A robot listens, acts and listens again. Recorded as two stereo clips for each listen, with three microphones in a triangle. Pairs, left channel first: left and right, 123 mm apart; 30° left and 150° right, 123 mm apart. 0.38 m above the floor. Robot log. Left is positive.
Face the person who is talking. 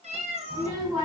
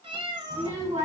note: The child speaking: 145° right.
cmd yaw -145
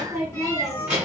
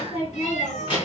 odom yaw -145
note: The child speaking is now 15° right.
cmd yaw -15
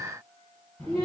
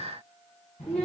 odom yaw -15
end: Facing the child speaking.